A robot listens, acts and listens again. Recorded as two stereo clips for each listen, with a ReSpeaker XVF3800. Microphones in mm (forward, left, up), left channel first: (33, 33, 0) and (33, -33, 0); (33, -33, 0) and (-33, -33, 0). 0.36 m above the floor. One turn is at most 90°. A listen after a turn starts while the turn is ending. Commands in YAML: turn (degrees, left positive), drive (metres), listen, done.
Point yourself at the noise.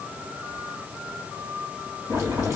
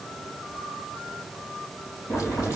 turn: -50
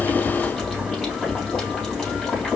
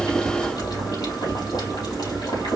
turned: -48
done: "Found it: boiling, straight ahead."